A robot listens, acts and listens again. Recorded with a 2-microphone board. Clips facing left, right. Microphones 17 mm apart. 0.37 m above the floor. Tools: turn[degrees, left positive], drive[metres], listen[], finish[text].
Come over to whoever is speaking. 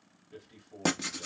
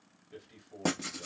Thought: The man speaking: about 20° right or 160° right.
Action: turn[-20]
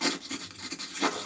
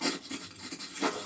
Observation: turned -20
Action: listen[]
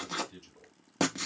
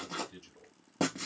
Action: drive[1.0]
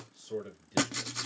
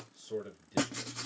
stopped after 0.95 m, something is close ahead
Action: finish[Arrived at the man speaking, straight ahead.]